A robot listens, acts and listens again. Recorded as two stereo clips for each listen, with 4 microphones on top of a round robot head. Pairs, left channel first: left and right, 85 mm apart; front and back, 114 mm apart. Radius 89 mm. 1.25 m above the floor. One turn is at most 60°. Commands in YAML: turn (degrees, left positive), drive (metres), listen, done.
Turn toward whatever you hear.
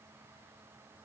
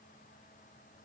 listen: true
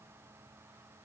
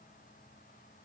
listen: true
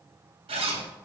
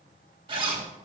turn: -60
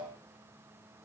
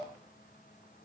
turn: -60
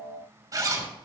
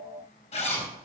turn: -45
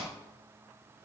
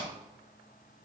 listen: true
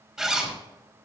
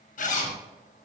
turn: -10
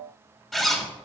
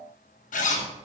done: "Facing the zipper."